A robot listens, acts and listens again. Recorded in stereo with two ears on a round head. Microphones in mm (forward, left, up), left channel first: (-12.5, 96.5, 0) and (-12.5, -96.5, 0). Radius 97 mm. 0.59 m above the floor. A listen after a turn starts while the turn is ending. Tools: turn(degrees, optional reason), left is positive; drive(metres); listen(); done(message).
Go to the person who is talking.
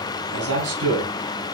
turn(degrees=-90)
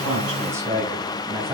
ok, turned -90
turn(degrees=-15, reason="So it is at 15° right.")
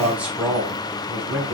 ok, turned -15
drive(metres=1.0)
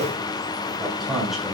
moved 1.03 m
drive(metres=1.0)
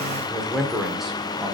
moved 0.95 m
drive(metres=1.0)
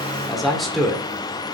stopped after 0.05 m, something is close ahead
done("I am next to the man speaking.")